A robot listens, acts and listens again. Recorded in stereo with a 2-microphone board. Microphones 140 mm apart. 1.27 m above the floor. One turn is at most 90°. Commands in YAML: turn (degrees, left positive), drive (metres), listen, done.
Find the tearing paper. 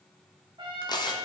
turn: 30
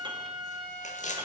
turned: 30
turn: 90
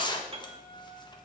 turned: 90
turn: 35
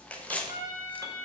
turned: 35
turn: 10
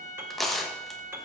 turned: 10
done: "Found it: tearing paper, straight ahead, 1 to 2 m away."